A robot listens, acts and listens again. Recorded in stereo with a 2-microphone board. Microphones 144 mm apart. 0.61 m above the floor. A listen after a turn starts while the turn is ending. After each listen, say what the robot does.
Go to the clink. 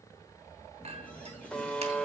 Turn 45° right.
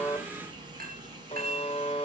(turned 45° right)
Turn 90° right.
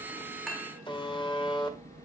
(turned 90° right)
Keep listening.
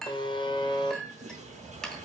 Drive 1.0 m forward.
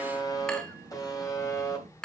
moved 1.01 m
Drive 1.0 m forward.
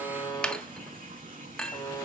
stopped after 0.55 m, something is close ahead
I am next to the clink.